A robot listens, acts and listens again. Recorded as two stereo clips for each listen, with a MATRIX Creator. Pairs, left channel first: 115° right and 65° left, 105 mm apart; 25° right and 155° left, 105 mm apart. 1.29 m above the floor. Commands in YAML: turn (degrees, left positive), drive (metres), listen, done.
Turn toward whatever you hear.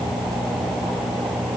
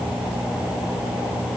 listen: true
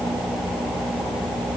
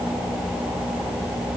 listen: true
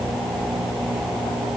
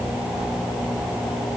done: "I can't make out anything."